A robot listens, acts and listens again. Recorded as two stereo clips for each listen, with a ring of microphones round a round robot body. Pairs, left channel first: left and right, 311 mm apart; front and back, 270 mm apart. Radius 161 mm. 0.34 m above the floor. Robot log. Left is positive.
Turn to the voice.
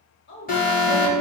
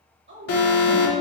note: The woman speaking: 140° left.
cmd yaw +140
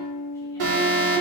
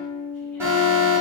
cmd idle
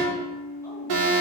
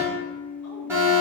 cmd idle
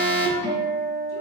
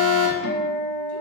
end: Facing where the woman speaking came from. I can't hear it now.